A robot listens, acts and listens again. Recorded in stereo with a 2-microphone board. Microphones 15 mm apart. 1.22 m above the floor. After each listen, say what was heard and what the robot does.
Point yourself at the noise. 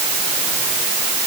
Keep listening.
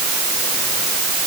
Keep listening.
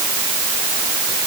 I can't make out anything to turn to.